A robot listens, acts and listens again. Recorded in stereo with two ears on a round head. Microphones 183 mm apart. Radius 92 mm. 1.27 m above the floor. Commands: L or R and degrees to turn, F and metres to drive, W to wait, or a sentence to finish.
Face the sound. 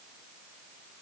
W
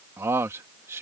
R30
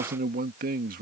R135
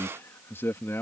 L10
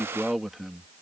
Facing the man speaking.